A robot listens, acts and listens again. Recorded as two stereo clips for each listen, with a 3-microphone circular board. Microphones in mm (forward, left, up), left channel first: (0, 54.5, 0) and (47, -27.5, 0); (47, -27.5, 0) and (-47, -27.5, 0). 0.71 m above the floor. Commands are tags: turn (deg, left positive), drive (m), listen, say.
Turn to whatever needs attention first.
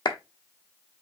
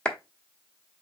<listen/>
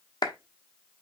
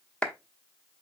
<listen/>
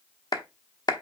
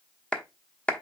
<say>I can't make out anything urgent, only a clap.</say>